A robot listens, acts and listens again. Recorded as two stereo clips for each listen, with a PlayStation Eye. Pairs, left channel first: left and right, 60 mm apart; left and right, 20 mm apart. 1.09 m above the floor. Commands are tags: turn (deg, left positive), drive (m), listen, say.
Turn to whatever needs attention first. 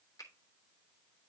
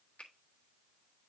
<listen/>
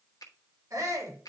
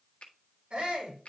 <turn deg="-70"/>
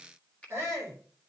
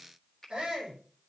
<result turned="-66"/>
<turn deg="-45"/>
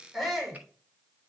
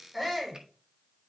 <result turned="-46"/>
<say>Found it: a shout, straight ahead, over 4 m away.</say>